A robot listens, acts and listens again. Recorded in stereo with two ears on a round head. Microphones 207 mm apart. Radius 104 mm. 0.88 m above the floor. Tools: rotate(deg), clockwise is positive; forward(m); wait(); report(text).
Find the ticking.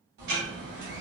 rotate(50)
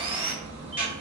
report("Facing the ticking.")